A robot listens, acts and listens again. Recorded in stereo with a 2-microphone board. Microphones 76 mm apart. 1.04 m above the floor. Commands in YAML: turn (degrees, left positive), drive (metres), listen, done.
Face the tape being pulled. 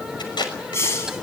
turn: 90
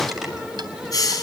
listen: true
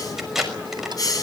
done: "Found it: tape being pulled, straight ahead."